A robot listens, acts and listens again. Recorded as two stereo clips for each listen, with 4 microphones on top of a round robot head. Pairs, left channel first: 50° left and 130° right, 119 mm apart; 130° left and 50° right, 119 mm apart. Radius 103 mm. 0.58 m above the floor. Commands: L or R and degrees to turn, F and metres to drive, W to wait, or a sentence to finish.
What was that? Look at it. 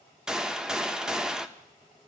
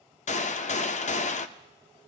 L145
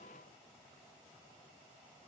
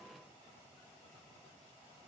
Facing where the gunshot came from. I can't hear it now.